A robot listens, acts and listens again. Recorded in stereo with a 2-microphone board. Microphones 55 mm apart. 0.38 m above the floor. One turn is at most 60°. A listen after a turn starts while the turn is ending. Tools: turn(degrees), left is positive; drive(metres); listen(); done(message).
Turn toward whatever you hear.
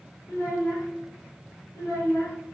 turn(degrees=60)
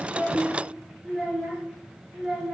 turn(degrees=-10)
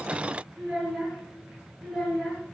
done("Found it: a child speaking, straight ahead, over 4 m away.")